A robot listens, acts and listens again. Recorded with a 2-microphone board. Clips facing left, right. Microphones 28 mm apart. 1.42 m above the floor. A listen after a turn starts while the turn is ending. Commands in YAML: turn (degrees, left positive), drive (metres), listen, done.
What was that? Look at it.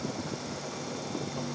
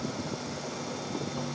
listen: true
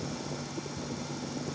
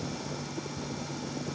listen: true
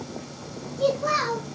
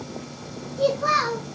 turn: -55
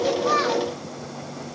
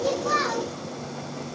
listen: true
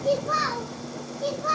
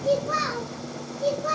turn: 20
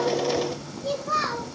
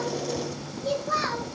done: "Found it: a child speaking, straight ahead."